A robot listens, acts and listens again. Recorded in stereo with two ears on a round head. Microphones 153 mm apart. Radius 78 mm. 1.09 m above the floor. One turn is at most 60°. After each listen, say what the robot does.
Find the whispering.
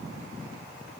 Keep listening.
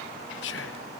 Turn 60° left.
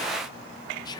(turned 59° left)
Turn 25° left.
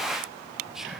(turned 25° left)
Found it: whispering, straight ahead, under 1 m away.